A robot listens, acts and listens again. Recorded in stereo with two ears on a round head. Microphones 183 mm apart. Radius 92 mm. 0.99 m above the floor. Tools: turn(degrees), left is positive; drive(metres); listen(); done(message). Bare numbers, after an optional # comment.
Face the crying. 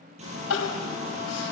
turn(90)
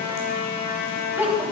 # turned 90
# So it is at 10° right.
turn(-10)
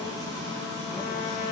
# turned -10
listen()
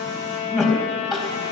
done("Facing the crying, over 4 m away.")